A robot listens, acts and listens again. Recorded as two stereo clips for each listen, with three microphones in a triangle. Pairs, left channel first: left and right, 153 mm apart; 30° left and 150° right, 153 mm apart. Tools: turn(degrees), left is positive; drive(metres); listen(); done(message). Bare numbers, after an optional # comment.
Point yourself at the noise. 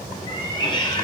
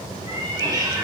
# The cat meowing: 150° left.
turn(150)
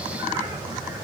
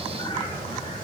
listen()
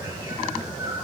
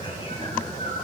# The cat meowing is now 25° right.
turn(-25)
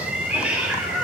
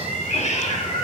# The cat meowing is now 10° right.
turn(-10)
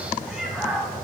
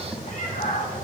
done("Facing the cat meowing, under 1 m away.")